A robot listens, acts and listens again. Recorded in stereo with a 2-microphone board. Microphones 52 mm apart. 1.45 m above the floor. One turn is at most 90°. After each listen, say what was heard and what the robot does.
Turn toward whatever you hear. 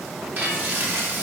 The frying: about 40° right or 140° right. Turn 40° right.
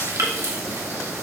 So it is at 100° right. Turn 90° right.
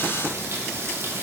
The frying is now 50° right. Turn 50° right.
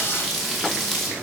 Facing the frying.